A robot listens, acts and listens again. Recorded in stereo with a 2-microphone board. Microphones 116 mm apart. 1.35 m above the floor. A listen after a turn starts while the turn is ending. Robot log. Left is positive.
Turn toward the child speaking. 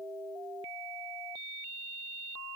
cmd idle
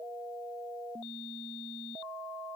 cmd idle
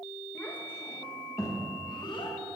note: The child speaking: about 40° left or 140° left.
cmd yaw +40
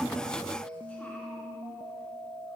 cmd idle
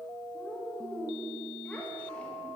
note: So it is at 10° left.
cmd yaw +10
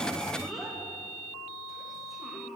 end: Facing the child speaking.